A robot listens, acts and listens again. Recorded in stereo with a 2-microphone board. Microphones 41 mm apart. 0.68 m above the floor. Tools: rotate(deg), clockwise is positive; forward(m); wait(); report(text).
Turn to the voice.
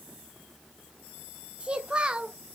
rotate(25)
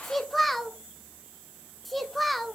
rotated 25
report("Found it: a child speaking, straight ahead.")